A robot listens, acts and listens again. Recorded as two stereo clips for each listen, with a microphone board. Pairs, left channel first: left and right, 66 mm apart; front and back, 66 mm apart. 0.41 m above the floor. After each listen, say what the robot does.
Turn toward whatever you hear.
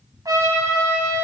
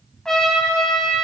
Turn 80° right.
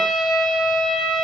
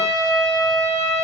Facing the trumpet, 2 to 4 m away.